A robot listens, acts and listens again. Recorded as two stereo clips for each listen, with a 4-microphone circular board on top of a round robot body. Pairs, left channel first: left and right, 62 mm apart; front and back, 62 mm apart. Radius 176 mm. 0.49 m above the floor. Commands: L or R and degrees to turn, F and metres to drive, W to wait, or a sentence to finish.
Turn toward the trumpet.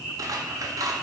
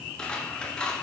W
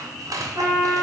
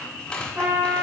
R120
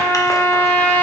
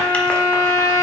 L25
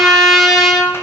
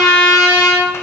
Facing the trumpet, 2 to 4 m away.